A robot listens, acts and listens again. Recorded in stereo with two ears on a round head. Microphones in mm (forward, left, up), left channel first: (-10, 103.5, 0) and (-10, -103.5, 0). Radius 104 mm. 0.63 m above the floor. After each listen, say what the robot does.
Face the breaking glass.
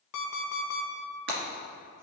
Turn 45° right.
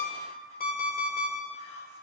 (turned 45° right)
Keep listening.
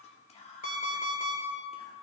I heard breaking glass, but can't make it out now. It was about straight ahead or 90° right.